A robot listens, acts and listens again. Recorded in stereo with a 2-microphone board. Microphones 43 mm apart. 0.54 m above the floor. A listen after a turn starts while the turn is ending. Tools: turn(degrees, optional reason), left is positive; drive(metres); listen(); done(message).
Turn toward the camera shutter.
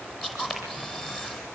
turn(degrees=30)
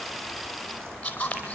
turn(degrees=155, reason="So it is at 155° left.")
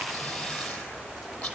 turn(degrees=40, reason="The camera shutter is now 40° left.")
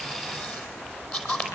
turn(degrees=30, reason="The camera shutter is now 30° left.")
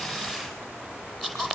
done("Facing the camera shutter.")